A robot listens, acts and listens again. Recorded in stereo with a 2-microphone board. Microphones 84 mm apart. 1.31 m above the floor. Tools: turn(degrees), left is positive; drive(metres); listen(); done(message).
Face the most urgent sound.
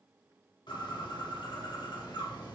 listen()
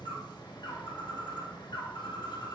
listen()
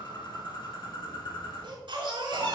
turn(degrees=-75)
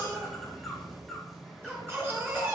turn(degrees=-30)
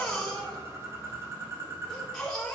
done("Facing the baby crying, 2 to 4 m away.")